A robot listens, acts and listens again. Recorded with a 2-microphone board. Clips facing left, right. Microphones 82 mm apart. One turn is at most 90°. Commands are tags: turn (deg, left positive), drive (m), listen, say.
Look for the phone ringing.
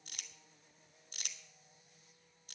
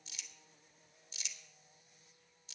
<listen/>
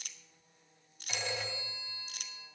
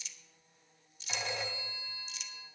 <turn deg="-30"/>
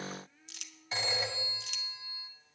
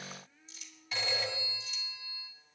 <turn deg="25"/>
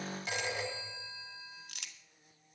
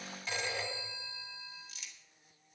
<turn deg="15"/>
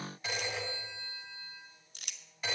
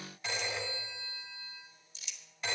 <say>Found it: a phone ringing, straight ahead.</say>